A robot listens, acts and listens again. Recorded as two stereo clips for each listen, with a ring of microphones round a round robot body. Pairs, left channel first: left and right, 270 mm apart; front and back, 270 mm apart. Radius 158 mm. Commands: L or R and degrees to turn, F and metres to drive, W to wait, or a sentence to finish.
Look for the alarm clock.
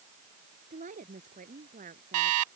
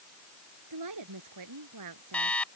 R85
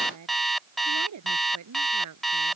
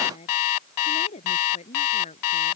Found it: an alarm clock, straight ahead.